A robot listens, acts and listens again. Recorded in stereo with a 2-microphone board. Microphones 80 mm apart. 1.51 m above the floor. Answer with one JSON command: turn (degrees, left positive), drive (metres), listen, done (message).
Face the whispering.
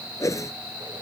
{"listen": true}
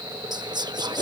{"turn": -65}
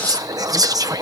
{"turn": -50}
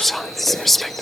{"done": "Facing the whispering."}